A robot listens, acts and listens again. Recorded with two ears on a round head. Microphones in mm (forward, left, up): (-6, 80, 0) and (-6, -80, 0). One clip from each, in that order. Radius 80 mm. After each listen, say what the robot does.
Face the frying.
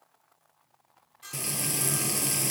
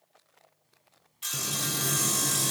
Turn 60° left.
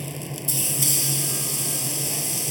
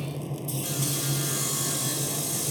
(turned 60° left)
Turn 55° left.
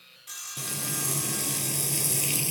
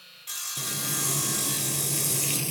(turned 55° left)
Turn 15° left.
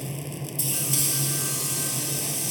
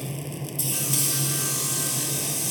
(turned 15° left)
Found it: frying, straight ahead.